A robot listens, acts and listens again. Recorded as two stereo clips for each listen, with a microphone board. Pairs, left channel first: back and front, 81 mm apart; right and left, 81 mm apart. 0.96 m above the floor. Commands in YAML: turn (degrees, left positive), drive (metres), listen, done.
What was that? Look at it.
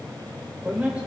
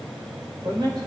turn: 75
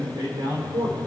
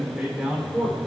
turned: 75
turn: 15
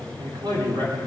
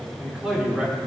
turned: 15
turn: 10
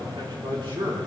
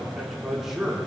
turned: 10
turn: 10
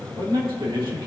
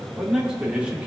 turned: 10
turn: 15
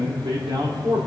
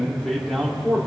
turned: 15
done: "Facing the man speaking."